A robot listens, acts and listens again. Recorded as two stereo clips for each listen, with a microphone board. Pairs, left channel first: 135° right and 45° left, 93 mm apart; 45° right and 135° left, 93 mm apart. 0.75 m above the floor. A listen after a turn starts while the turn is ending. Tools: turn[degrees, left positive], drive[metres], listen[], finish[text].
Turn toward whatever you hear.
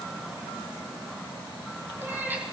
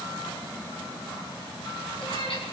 Thought: The cat meowing: 25° right.
Action: turn[-25]
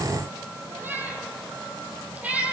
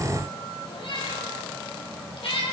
Thought: The cat meowing is now 30° right.
Action: turn[-30]
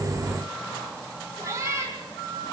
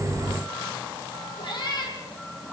Thought: The cat meowing is now 10° right.
Action: turn[-10]
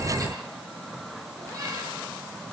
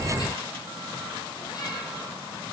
Action: listen[]
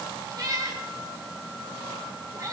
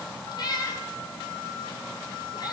Action: finish[Facing the cat meowing.]